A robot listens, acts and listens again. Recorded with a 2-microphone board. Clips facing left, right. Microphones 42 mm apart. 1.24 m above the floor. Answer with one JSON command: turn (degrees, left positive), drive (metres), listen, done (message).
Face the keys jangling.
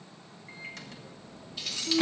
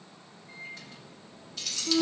{"turn": 15}
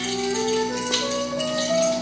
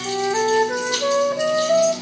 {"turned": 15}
{"listen": true}
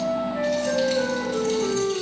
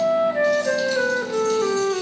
{"listen": true}
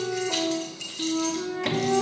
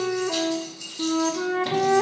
{"turn": 110}
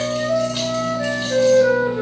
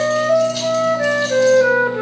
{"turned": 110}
{"listen": true}
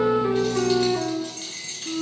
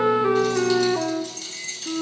{"turn": 30}
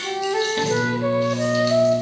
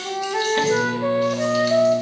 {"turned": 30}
{"listen": true}
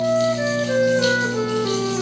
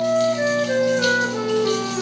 {"listen": true}
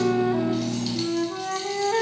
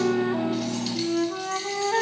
{"done": "Facing where the keys jangling came from. I can't hear it now."}